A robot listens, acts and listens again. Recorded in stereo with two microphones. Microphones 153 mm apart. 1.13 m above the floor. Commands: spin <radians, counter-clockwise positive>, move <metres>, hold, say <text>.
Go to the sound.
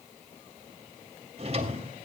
spin -0.79
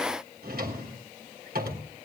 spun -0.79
spin -1.57
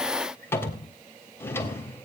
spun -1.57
spin 0.26
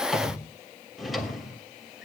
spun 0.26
move 1.0
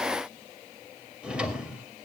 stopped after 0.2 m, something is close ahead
say Blocked. The drawer is further on, straight ahead.